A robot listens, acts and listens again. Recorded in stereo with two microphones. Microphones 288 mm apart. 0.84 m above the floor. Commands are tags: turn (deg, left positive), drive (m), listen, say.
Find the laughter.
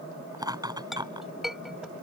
<turn deg="-30"/>
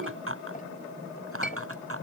<turn deg="-130"/>
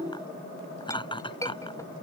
<turn deg="15"/>
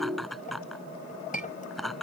<say>Facing the laughter.</say>